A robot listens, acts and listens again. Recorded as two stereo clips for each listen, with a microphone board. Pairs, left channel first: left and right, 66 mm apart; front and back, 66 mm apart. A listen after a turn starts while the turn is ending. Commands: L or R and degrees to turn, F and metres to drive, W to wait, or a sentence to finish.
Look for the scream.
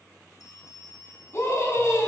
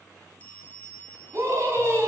L135
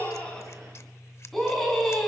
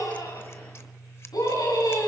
Found it: a scream, straight ahead, over 4 m away.